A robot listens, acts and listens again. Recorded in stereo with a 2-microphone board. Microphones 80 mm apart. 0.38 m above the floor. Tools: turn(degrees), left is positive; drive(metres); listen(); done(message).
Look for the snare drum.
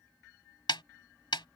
turn(degrees=90)
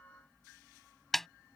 done("Found it: a snare drum, straight ahead.")